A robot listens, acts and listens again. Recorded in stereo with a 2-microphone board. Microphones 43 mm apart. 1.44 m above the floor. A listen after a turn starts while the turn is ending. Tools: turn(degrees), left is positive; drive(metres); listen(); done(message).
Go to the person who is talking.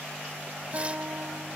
listen()
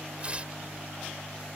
listen()
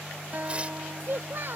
turn(degrees=-60)
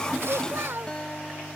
turn(degrees=-60)
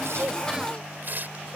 turn(degrees=-15)
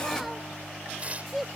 drive(metres=1.0)
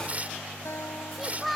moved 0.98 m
drive(metres=1.0)
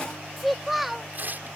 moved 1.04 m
drive(metres=1.0)
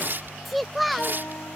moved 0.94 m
drive(metres=1.0)
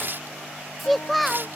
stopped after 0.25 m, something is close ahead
done("I am next to the child speaking.")